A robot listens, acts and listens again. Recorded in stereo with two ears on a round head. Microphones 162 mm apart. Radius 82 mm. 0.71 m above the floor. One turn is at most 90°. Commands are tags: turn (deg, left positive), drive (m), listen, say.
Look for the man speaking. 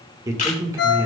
<turn deg="-20"/>
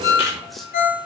<listen/>
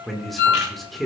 <say>Found it: a man speaking, straight ahead.</say>